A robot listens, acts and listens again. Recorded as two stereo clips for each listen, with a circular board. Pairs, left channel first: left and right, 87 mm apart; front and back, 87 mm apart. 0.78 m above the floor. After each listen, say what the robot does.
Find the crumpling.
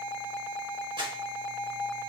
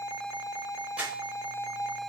Turn 105° right.
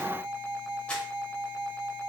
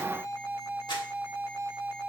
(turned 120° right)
Turn 15° left.
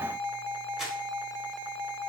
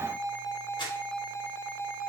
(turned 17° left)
Keep listening.
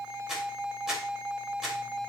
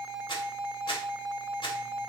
Found it: crumpling, straight ahead, under 1 m away.